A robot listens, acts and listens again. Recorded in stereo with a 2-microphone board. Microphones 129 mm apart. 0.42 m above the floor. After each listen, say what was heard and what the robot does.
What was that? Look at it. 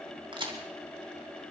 The crack: about 40° right or 140° right. Turn 40° right.
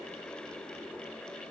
Keep listening.
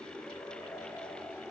I heard a crack, but can't make it out now. It was about straight ahead or 100° right.